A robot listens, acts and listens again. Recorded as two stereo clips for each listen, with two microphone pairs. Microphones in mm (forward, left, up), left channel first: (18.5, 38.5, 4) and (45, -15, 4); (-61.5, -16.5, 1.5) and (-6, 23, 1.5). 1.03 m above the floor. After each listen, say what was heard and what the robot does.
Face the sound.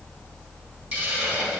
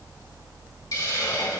The hiss: 135° right. Turn 135° right.
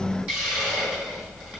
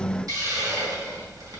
Facing the hiss.